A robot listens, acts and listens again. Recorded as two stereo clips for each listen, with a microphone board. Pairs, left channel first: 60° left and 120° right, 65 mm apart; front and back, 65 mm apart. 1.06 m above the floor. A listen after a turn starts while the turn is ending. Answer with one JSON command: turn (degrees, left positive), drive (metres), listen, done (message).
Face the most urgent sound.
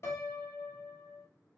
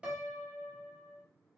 {"listen": true}
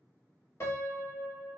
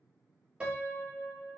{"listen": true}
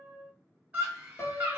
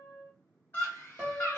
{"turn": -55}
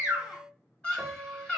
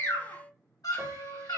{"turn": -10}
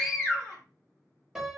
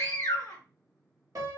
{"done": "Found it: a scream, straight ahead, 1 to 2 m away."}